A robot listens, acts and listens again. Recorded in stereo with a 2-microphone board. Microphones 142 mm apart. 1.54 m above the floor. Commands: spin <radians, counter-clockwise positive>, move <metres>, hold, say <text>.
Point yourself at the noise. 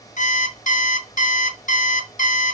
spin 1.05
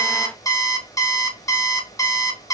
spin 0.44
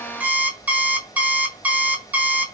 spin -0.26
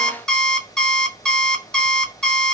say Found it: an alarm clock, straight ahead.